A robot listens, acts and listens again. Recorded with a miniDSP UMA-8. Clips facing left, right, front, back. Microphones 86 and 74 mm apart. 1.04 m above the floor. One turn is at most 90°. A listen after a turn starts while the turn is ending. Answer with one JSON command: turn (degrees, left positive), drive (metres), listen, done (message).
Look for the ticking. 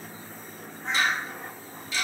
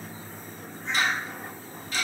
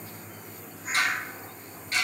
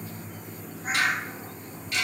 {"turn": -55}
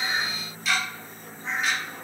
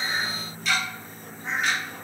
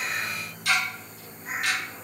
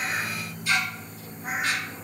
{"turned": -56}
{"done": "Found it: ticking, straight ahead, 1 to 2 m away."}